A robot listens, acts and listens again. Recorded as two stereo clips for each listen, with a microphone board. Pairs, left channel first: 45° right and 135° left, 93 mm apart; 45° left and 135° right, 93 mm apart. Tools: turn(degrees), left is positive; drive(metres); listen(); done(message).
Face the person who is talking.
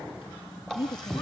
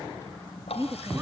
turn(degrees=-75)
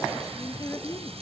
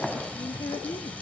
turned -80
done("Facing the woman speaking, under 1 m away.")